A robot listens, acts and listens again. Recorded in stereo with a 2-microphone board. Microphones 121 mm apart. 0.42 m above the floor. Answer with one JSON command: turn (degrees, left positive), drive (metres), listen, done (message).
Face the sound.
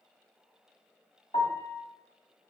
{"turn": 70}
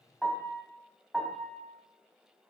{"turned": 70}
{"done": "Found it: a piano, straight ahead."}